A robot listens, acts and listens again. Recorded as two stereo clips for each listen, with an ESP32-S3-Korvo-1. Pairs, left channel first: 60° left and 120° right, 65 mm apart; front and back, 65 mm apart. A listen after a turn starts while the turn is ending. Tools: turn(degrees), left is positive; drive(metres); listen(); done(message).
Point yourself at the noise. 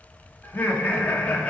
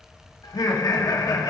turn(degrees=-10)
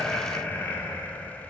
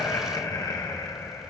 turn(degrees=-10)
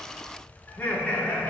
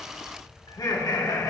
turn(degrees=-10)
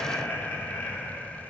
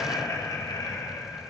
done("Facing the laughter, 2 to 4 m away.")